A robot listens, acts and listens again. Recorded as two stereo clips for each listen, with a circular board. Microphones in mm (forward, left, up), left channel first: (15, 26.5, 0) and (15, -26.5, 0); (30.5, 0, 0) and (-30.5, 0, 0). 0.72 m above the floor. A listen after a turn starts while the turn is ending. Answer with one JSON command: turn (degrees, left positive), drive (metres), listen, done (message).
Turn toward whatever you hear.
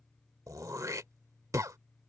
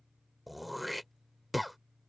{"turn": -90}
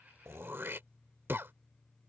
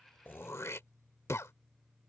{"turn": -40}
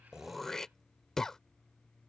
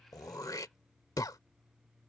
{"turn": 10}
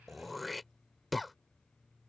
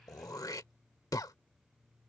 {"done": "Found it: throat clearing, straight ahead."}